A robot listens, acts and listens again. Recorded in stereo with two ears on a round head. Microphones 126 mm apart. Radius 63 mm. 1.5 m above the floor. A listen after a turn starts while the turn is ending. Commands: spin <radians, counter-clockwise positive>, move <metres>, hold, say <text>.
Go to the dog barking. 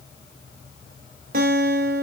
hold
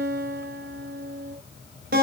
hold
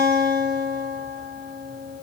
say I can't make out a dog barking to turn to.